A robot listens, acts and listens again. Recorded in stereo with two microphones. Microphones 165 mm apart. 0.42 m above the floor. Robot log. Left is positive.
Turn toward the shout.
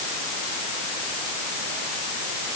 cmd idle
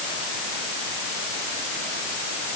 cmd idle
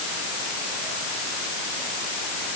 end: I can't make out a shout to turn to.